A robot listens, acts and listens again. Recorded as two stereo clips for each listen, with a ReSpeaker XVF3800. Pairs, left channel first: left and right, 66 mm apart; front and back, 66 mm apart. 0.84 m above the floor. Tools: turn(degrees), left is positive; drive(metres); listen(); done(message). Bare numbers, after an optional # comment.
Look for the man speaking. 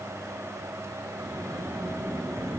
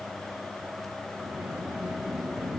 listen()
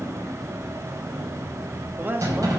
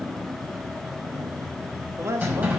# The man speaking: 145° right.
turn(-145)
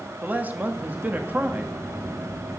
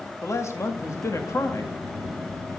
# The man speaking is now 30° right.
turn(-30)
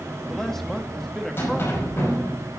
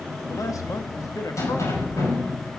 listen()
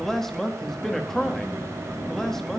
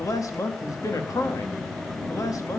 done("Found it: a man speaking, straight ahead, 1 to 2 m away.")